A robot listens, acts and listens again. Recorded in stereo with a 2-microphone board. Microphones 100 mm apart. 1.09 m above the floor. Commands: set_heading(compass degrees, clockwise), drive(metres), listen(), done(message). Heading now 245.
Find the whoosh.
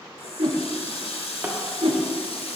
set_heading(315)
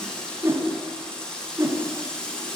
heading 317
set_heading(342)
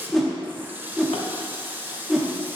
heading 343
done("Facing the whoosh.")